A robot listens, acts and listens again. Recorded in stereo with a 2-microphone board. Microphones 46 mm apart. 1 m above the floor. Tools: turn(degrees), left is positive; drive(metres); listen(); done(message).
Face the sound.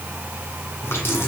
turn(degrees=60)
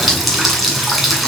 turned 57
done("Found it: a running tap, straight ahead, over 4 m away.")